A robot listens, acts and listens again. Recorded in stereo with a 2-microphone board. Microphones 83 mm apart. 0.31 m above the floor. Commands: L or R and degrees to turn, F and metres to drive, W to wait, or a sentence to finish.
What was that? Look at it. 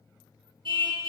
R90
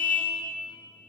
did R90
L15
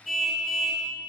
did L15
Facing the car horn.